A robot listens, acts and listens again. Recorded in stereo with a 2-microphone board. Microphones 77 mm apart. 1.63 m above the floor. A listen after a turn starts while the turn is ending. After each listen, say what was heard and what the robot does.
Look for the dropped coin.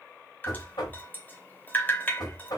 Keep listening.
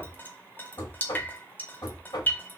Keep listening.
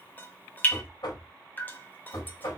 I can't make out a dropped coin to turn to.